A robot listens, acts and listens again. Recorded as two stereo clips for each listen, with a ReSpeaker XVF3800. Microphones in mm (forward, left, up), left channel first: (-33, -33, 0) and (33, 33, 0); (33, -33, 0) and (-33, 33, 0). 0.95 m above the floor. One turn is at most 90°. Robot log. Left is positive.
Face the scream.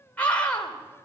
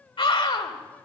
note: The scream: 60° right.
cmd yaw -60
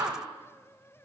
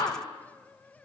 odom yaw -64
end: Found it: a scream, straight ahead, 2 to 4 m away.